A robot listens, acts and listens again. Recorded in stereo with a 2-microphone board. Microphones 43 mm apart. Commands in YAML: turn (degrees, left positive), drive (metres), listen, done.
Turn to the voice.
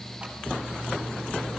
listen: true
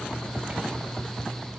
listen: true
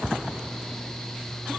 done: "I can't make out anyone speaking."